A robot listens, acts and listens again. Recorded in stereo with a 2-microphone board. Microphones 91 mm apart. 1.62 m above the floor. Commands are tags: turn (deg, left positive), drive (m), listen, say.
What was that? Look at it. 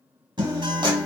<turn deg="-55"/>
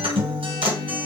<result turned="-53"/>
<turn deg="-75"/>
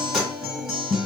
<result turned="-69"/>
<say>Found it: a guitar, straight ahead.</say>